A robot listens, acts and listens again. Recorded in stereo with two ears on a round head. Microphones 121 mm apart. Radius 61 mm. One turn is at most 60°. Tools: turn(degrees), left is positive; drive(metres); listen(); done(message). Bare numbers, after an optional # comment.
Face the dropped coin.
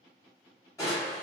listen()
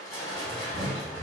listen()
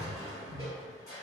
done("I can't make out a dropped coin, only crushing.")